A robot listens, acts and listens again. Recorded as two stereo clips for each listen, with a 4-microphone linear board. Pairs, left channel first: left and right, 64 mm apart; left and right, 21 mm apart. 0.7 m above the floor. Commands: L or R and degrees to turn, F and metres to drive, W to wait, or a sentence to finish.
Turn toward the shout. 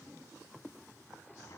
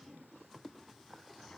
W
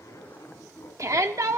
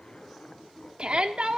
R55
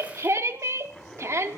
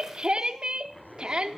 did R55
R55
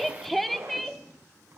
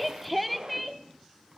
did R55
Found it: a shout, straight ahead.